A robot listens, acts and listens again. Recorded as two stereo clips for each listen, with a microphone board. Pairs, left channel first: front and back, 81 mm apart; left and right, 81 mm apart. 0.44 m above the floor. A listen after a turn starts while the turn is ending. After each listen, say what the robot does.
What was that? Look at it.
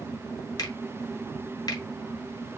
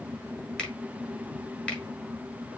Turn 15° left.
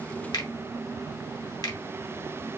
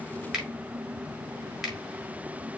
Found it: a finger snap, straight ahead.